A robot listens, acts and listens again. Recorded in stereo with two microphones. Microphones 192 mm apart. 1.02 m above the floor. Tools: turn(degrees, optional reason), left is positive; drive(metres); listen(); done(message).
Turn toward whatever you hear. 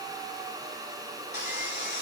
turn(degrees=65, reason="The sawing: about 65° left or 115° left.")
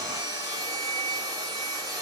done("Facing the sawing, 2 to 4 m away.")